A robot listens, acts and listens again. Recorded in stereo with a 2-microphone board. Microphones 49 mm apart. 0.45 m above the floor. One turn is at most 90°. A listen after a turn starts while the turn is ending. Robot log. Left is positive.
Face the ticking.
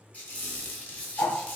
note: The ticking: about 70° left or 110° left.
cmd yaw +70
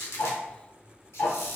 note: So it is at 45° left.
cmd yaw +45
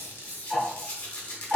end: Facing the ticking.